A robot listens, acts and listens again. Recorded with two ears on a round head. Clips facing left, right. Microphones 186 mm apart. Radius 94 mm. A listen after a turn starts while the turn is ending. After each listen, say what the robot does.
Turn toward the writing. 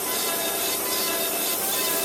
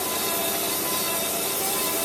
Keep listening.
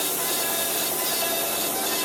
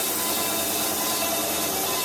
Keep listening.
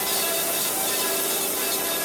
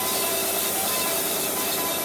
I can't make out writing to turn to.